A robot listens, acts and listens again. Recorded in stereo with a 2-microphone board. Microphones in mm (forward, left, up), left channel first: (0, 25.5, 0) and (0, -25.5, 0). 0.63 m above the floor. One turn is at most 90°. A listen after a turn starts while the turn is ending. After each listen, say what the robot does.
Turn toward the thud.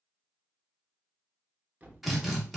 Turn 35° right.
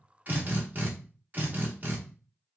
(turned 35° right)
Keep listening.
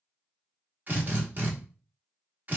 I heard a thud, but can't make it out now. It was about straight ahead or 110° right.